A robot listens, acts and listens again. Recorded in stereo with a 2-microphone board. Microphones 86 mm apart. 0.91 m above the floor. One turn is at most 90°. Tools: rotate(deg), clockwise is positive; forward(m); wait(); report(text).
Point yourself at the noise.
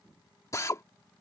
rotate(-35)
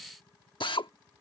rotate(-90)
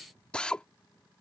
rotate(-10)
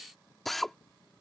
report("Facing the drill.")